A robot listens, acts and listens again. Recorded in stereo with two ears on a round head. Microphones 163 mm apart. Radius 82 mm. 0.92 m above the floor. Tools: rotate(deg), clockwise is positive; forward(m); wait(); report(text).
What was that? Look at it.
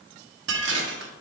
rotate(75)
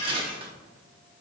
rotate(30)
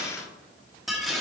report("Found it: dishes clattering, straight ahead.")